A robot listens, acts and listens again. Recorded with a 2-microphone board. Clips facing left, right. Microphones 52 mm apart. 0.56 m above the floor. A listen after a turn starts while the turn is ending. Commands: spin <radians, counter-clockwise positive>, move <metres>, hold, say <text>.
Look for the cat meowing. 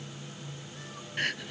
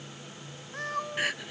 spin -1.05
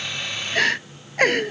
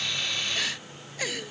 hold
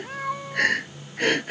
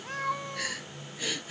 say Facing the cat meowing.